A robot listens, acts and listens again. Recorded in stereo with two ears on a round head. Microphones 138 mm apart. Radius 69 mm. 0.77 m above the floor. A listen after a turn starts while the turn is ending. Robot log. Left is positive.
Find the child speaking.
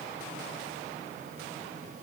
cmd idle
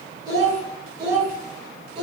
note: The child speaking: about 35° right or 145° right.
cmd yaw -35
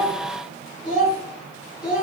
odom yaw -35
end: Found it: a child speaking, straight ahead.